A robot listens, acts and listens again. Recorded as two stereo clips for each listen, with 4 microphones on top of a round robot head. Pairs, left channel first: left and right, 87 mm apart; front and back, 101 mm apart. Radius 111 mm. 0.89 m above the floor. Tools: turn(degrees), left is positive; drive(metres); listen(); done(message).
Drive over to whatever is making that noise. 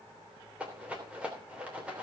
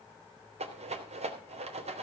turn(degrees=-170)
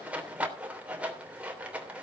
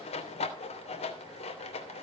turn(degrees=-15)
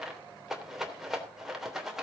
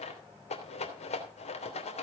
drive(metres=1.0)
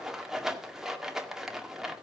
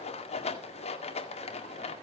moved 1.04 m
drive(metres=1.0)
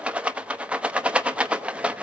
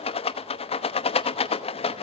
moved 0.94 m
turn(degrees=-15)
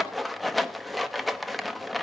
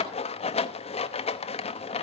drive(metres=1.0)
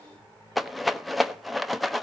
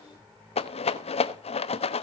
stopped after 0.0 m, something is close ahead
done("Arrived at the rattle, straight ahead.")